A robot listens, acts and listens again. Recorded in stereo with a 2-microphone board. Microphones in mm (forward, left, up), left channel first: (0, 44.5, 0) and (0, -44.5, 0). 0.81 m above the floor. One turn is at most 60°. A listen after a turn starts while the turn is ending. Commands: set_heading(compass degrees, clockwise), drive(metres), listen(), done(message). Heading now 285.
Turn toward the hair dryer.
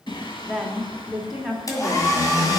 set_heading(245)
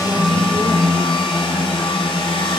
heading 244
set_heading(184)
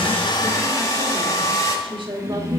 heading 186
set_heading(151)
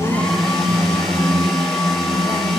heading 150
listen()
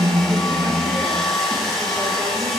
done("Found it: a hair dryer, straight ahead, 2 to 4 m away.")